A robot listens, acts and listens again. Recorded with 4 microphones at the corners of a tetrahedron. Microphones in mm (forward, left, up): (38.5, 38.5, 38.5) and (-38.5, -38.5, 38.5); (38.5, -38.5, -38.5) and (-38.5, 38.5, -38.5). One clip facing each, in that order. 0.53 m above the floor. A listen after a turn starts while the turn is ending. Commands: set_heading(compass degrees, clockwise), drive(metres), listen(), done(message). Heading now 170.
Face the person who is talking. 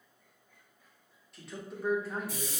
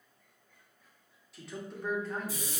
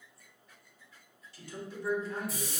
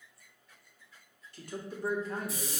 set_heading(50)
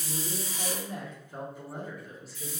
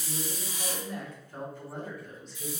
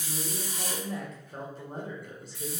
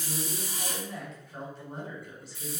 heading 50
set_heading(85)
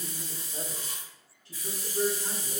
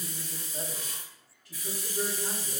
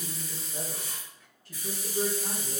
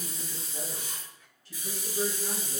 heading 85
set_heading(100)
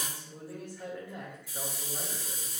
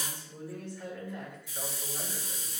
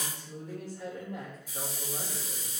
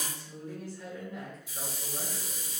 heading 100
done("Facing the man speaking, 1 to 2 m away.")